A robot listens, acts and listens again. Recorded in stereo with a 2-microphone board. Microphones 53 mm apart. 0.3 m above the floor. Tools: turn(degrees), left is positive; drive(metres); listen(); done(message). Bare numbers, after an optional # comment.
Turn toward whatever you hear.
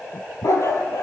# The dog barking: about 60° left or 120° left.
turn(60)
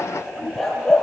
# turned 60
done("Found it: a dog barking, straight ahead.")